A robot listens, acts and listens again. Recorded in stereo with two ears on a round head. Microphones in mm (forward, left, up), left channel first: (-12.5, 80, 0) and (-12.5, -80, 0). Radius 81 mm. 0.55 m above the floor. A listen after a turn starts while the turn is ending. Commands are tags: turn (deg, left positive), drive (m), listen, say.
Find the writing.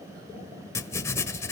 <turn deg="15"/>
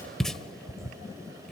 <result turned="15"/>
<say>Facing the writing, 1 to 2 m away.</say>